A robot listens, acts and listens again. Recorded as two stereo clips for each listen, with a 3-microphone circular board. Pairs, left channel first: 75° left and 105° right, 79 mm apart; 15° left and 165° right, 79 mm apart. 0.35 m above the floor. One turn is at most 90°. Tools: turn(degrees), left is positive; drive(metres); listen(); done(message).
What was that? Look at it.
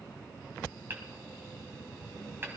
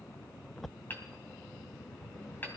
turn(degrees=-45)
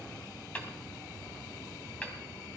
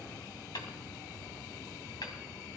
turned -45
done("Facing the hammering, 1 to 2 m away.")